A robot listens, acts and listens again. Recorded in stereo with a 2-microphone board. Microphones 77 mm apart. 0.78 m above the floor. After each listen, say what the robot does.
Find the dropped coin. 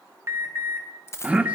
Turn 35° left.
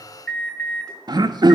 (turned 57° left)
Keep listening.
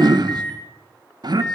I heard a dropped coin, but can't make it out now. It was about 25° right or 90° left.